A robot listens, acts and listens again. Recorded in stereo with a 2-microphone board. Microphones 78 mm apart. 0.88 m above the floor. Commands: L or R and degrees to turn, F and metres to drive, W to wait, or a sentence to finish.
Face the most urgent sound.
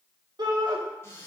R60
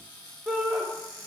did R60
Found it: a shout, straight ahead, 2 to 4 m away.